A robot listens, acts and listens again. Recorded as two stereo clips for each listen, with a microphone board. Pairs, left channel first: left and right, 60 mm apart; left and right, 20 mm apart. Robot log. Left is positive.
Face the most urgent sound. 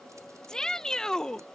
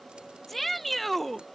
cmd yaw +30
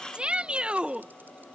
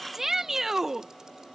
note: So it is at 20° right.
cmd yaw -20
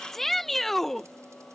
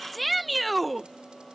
end: Found it: a shout, straight ahead.